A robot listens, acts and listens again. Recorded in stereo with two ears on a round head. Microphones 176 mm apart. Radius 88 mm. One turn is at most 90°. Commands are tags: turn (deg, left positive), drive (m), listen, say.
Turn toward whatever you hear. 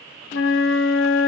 <turn deg="70"/>
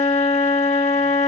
<turn deg="35"/>
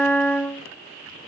<turn deg="10"/>
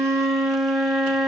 <say>Found it: a flute, straight ahead, under 1 m away.</say>